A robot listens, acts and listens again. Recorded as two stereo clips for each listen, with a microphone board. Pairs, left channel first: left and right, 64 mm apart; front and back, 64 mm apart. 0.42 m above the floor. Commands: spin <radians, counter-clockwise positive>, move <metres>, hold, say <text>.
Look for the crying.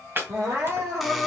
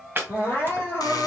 spin -0.96
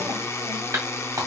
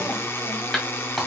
hold
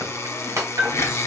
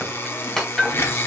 hold
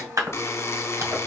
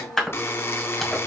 say I heard crying from this way, but can't make it out now.